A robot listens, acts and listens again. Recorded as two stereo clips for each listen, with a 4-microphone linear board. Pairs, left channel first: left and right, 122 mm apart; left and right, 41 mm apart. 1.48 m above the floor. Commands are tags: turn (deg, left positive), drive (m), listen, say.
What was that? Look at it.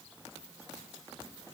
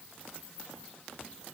<listen/>
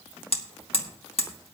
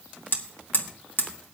<turn deg="55"/>
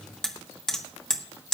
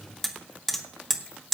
<say>Found it: hammering, straight ahead, 1 to 2 m away.</say>